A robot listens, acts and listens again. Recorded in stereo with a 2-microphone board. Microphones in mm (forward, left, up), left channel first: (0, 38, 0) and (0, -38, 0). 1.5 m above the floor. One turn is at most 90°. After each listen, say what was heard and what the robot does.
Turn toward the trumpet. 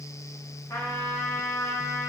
The trumpet: about 45° left or 135° left. Turn 45° left.
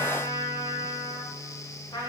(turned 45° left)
So it is at 85° left. Turn 85° left.
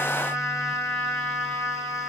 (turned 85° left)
The trumpet is now 15° left. Turn 15° left.
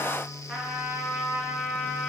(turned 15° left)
Found it: a trumpet, straight ahead, 1 to 2 m away.